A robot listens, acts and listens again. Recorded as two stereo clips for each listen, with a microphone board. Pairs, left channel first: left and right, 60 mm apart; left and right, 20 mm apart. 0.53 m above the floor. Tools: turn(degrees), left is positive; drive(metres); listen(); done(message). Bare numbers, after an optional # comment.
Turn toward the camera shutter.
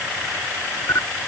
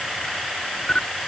# The camera shutter: about 60° left or 120° left.
turn(60)
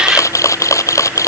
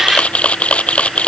# So it is at 60° left.
turn(60)
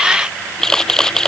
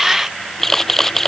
done("Found it: a camera shutter, straight ahead.")